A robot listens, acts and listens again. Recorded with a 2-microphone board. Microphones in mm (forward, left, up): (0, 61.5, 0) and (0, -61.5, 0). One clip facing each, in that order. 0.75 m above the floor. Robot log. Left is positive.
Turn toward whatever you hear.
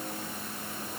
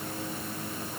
cmd idle
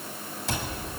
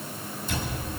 cmd yaw +90
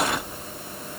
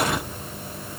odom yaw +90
cmd idle
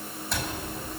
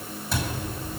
end: Facing the cupboard door, over 4 m away.